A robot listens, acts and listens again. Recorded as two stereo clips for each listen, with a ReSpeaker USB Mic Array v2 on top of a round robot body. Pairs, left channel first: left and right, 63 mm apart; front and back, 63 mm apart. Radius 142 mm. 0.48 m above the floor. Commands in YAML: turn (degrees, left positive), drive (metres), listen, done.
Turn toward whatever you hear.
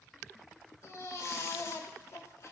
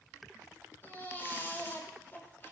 turn: 55
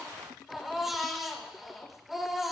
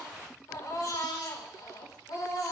done: "Found it: a baby crying, straight ahead."